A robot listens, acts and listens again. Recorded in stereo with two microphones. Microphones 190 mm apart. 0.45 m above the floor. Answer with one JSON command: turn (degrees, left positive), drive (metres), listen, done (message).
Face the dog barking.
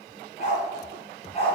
{"turn": 35}
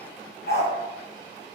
{"turn": 120}
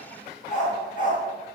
{"turn": 45}
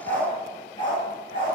{"turn": 25}
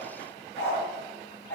{"turn": 10}
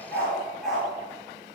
{"done": "Facing the dog barking."}